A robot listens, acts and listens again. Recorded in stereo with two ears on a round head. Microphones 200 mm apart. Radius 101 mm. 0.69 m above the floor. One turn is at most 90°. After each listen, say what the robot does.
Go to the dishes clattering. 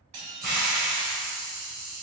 Turn 90° right.
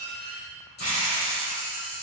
Drive 1.0 m forward.
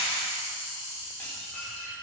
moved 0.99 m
Drive 1.0 m forward.
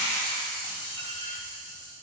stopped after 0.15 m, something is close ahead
Turn 10° left.
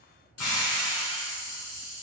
Keep listening.
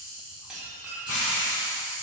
I am next to the dishes clattering.